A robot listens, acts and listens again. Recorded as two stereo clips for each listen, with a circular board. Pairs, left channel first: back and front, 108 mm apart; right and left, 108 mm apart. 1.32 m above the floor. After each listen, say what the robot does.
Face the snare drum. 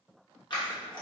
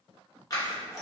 Keep listening.
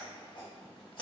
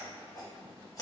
Keep listening.
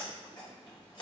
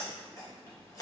I can't make out a snare drum to turn to.